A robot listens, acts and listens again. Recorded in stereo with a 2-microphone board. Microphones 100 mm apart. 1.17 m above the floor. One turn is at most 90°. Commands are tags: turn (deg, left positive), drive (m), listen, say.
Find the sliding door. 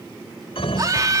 <turn deg="90"/>
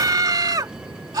<turn deg="-10"/>
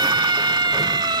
<listen/>
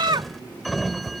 <say>Facing the sliding door.</say>